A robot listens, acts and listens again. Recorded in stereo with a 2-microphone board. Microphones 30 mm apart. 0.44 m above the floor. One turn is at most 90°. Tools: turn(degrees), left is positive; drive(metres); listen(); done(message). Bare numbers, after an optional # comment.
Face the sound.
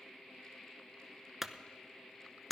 turn(-30)
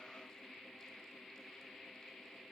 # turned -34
listen()
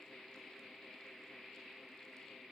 done("I heard a clunk, but can't make it out now. It was about 25° left or 135° right.")